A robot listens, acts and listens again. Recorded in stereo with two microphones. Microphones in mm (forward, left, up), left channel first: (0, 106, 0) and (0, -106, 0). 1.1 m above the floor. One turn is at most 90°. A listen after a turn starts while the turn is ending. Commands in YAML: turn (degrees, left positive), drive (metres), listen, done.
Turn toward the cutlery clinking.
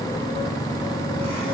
listen: true
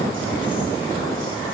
listen: true
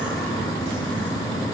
done: "I can't make out cutlery clinking."